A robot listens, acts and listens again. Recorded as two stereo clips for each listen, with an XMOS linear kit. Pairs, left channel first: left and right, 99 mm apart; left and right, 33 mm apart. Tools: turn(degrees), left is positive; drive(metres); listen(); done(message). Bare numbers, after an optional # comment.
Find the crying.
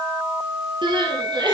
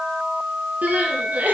# The crying: about 55° right or 125° right.
turn(-55)
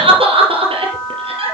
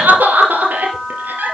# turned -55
# So it is at 75° right.
turn(-75)
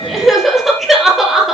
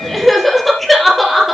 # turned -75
done("Facing the crying, 2 to 4 m away.")